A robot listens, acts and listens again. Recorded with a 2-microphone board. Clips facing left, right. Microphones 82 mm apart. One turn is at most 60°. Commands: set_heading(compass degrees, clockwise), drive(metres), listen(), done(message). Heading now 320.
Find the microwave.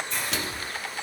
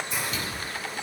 set_heading(260)
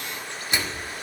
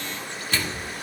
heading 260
set_heading(240)
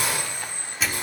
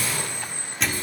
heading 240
done("Found it: a microwave, straight ahead.")